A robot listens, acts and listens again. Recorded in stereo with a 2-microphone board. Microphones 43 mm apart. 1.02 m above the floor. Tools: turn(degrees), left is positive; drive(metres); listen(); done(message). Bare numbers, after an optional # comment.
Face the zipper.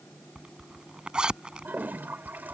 # The zipper: about 20° right or 160° right.
turn(-20)
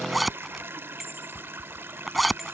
done("Found it: a zipper, straight ahead.")